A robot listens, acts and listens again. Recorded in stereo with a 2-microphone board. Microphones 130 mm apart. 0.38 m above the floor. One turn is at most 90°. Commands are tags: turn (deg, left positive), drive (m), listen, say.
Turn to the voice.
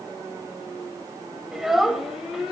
<turn deg="-30"/>
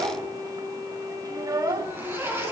<turn deg="-90"/>
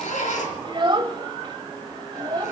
<turn deg="-50"/>
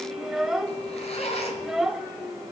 <say>Facing the child speaking, 1 to 2 m away.</say>